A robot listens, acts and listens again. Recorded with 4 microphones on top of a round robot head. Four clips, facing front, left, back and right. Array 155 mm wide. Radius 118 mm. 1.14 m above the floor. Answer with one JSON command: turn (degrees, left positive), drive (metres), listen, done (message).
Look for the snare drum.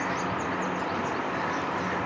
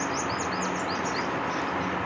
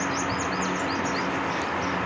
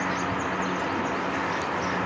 {"listen": true}
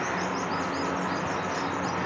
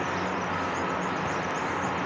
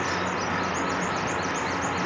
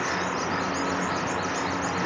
{"listen": true}
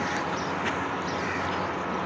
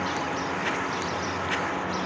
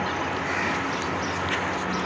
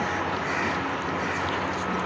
{"done": "I can't make out a snare drum."}